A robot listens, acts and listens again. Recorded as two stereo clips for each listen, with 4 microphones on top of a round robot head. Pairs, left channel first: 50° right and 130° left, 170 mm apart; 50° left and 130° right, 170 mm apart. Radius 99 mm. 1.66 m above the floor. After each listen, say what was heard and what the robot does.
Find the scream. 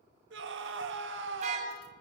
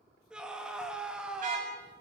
The scream: 145° left. Turn 145° left.
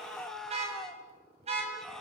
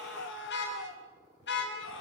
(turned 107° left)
The scream is now 35° left. Turn 35° left.
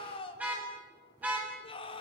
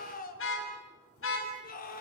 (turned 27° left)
The scream is now 10° left. Turn 10° left.
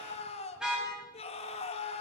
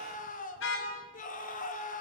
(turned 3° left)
Found it: a scream, straight ahead.